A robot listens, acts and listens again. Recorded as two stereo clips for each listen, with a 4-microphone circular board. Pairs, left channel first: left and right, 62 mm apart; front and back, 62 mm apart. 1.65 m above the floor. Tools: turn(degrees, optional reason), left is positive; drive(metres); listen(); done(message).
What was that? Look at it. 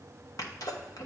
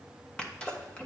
turn(degrees=75, reason="The sneeze: 75° left.")
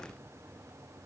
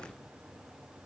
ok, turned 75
done("Facing where the sneeze came from. I can't hear it now.")